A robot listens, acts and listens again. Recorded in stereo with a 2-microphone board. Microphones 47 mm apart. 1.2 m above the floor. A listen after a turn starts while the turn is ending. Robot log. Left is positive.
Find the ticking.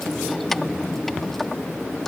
cmd idle
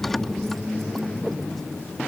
cmd idle
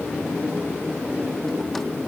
end: I can't make out ticking to turn to.